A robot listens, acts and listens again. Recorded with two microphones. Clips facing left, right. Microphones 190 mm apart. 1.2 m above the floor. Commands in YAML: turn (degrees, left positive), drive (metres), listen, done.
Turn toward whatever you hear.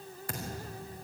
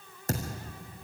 turn: -45
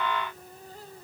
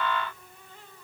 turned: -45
listen: true
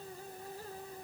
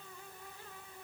done: "I heard a thud, but can't make it out now. It was about straight ahead or 90° right."